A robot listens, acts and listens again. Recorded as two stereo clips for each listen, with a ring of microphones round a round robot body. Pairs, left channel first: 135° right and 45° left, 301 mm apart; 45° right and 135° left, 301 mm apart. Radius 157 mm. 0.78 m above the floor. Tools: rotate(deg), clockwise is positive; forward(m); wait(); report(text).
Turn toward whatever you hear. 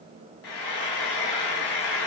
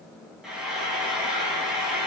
rotate(135)
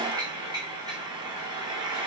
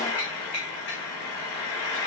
rotate(30)
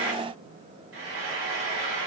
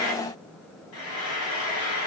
report("Found it: frying, straight ahead.")